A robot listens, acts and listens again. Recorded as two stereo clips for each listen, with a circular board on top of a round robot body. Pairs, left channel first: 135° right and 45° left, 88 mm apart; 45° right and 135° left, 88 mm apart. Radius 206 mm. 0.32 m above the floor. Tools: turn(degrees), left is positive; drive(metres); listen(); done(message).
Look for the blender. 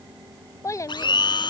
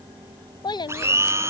turn(degrees=-165)
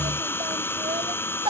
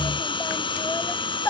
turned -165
turn(degrees=-70)
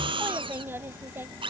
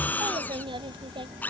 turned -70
turn(degrees=25)
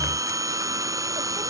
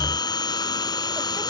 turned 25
done("Facing the blender.")